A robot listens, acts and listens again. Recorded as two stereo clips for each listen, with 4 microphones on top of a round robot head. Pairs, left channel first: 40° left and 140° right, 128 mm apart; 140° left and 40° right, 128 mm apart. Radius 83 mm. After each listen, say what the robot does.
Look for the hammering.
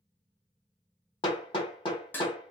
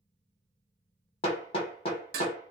Turn 90° left.
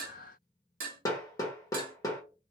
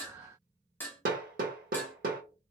Turn 25° right.
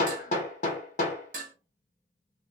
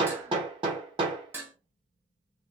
Turn 10° left.
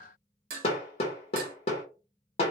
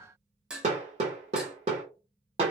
Facing the hammering, 1 to 2 m away.